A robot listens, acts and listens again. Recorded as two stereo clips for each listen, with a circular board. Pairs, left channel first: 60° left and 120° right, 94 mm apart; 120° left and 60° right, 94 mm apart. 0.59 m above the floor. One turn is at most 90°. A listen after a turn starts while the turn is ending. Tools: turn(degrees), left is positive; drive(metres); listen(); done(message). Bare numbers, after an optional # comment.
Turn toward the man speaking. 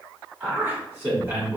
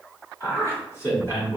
# The man speaking: straight behind.
turn(90)
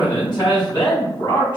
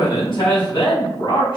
# The man speaking is now 95° left.
turn(90)
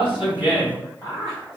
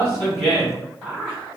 # The man speaking is now 20° left.
turn(20)
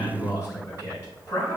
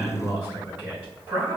done("Found it: a man speaking, straight ahead.")